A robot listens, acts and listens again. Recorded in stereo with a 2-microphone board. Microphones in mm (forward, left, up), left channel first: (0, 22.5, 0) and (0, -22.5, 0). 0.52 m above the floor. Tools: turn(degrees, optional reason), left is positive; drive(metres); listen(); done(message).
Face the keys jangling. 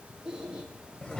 listen()
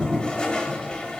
listen()
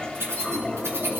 turn(degrees=-90)
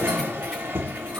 listen()
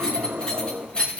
turn(degrees=25, reason="The keys jangling is now 25° left.")
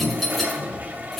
done("Found it: keys jangling, straight ahead, 2 to 4 m away.")